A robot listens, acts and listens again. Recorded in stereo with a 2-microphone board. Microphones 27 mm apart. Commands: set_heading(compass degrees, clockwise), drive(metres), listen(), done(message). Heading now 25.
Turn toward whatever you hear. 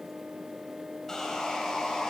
set_heading(5)
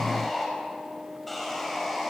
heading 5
done("Found it: sawing, straight ahead, over 4 m away.")